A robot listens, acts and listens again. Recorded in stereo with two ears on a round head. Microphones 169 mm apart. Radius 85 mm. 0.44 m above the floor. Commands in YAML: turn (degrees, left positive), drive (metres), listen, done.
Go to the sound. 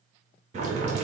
turn: -35
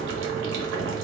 turn: -105
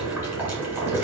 turn: -10
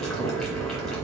drive: 1.0
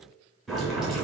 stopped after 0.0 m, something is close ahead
done: "Blocked. The boiling is further on, straight ahead."